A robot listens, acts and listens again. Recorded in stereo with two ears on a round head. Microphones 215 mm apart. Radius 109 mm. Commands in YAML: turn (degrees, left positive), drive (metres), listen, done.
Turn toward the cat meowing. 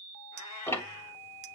turn: 75
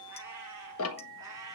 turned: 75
turn: -15
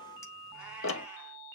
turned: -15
listen: true
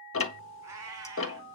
turn: -15
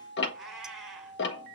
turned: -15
done: "Found it: a cat meowing, straight ahead, over 4 m away."